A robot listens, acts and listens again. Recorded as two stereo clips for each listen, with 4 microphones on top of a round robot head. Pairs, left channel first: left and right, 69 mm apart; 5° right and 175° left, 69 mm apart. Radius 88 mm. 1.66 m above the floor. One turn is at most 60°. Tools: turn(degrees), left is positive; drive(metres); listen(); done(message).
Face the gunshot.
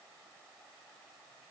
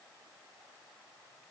listen()
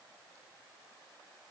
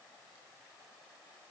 listen()
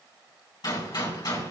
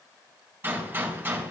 turn(degrees=60)
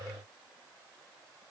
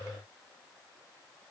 turn(degrees=55)
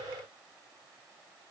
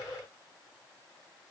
done("Facing where the gunshot came from. I can't hear it now.")